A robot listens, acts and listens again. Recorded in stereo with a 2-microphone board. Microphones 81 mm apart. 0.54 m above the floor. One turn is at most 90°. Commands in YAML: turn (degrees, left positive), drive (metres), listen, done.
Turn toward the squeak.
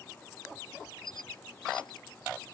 turn: 75
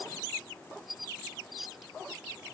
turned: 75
done: "Found it: a squeak, straight ahead."